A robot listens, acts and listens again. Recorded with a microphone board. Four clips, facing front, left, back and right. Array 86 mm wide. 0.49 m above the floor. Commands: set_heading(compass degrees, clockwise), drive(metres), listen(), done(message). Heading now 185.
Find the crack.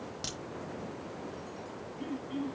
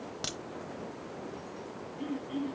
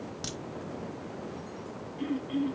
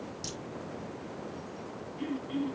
set_heading(95)
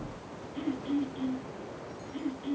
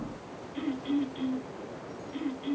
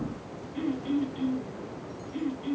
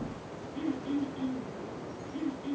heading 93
done("I heard a crack from this way, but can't make it out now.")